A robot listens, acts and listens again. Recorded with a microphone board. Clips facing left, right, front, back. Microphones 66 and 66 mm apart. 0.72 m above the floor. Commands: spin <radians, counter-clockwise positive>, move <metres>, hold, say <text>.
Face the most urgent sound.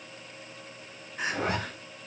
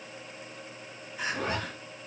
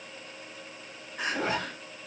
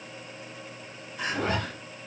spin 0.79
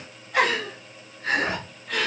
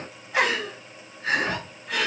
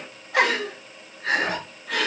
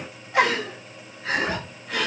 say Facing the crying, 1 to 2 m away.